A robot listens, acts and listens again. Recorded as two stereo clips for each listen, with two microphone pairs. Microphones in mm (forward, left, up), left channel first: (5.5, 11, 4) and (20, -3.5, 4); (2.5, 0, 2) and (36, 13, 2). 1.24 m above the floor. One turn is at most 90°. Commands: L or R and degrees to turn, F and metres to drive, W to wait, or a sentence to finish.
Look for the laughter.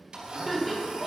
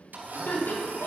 R90
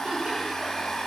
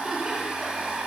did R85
R45
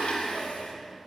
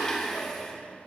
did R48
W
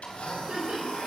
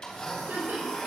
R15
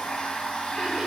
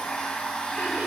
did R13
W
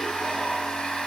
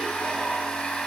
W
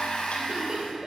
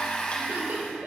Facing the laughter, over 4 m away.